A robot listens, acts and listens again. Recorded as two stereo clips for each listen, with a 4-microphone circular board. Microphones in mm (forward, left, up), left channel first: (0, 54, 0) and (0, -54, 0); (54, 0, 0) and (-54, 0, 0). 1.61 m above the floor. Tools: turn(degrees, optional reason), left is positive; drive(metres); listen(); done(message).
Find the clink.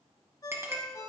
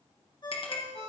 turn(degrees=-25, reason="The clink: 25° right.")
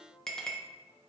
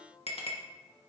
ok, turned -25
done("Facing the clink, 1 to 2 m away.")